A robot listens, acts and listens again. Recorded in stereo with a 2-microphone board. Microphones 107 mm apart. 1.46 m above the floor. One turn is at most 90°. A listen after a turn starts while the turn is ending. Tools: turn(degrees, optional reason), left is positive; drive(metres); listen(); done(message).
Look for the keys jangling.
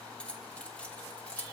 turn(degrees=30)
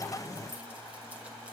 listen()
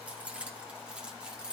turn(degrees=-10, reason="So it is at 10° right.")
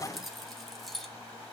done("Facing the keys jangling, 2 to 4 m away.")